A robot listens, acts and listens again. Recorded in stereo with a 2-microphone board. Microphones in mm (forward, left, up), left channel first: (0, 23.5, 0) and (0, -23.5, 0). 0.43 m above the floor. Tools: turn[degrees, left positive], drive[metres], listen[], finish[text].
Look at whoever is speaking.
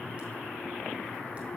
Action: listen[]
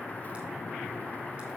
Action: listen[]
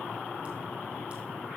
Action: finish[I can't make out anyone speaking to turn to.]